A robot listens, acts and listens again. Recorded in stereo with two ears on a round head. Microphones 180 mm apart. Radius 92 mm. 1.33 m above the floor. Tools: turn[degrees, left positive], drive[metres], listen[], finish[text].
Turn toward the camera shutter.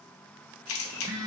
Action: turn[90]
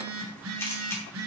Thought: So it is at 10° left.
Action: turn[10]
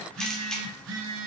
Action: finish[Found it: a camera shutter, straight ahead, under 1 m away.]